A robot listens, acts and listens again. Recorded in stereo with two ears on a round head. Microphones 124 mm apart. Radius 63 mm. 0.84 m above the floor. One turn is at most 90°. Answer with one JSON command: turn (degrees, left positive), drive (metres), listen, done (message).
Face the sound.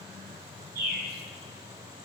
{"turn": -65}
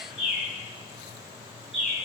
{"done": "Facing the bird."}